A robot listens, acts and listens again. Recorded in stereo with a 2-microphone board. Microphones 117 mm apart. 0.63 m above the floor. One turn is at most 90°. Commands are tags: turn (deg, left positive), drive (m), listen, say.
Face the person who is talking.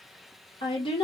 <turn deg="45"/>
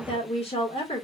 <turn deg="75"/>
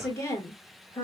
<turn deg="30"/>
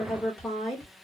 <say>Found it: a woman speaking, straight ahead, 1 to 2 m away.</say>